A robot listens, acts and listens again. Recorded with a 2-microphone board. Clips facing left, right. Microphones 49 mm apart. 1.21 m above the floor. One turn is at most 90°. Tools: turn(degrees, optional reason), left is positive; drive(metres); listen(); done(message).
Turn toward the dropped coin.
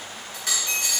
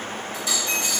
turn(degrees=70, reason="The dropped coin: about 70° left or 110° left.")
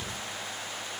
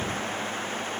listen()
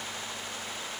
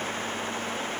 done("I heard a dropped coin, but can't make it out now. It was about straight ahead or 40° left.")